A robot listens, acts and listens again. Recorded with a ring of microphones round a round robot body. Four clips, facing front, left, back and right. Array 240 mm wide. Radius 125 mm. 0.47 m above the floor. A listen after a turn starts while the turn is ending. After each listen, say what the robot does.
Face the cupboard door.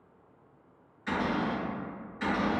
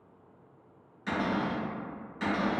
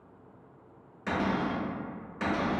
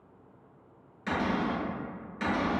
Turn 165° right.
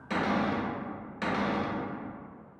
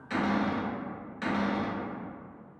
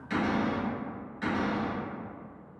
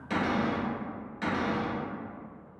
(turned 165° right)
Facing the cupboard door, 1 to 2 m away.